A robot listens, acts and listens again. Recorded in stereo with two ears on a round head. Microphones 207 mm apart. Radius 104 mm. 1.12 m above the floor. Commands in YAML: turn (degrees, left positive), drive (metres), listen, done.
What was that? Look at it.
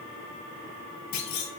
turn: 90
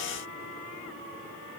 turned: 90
done: "Facing where the clunk came from. I can't hear it now."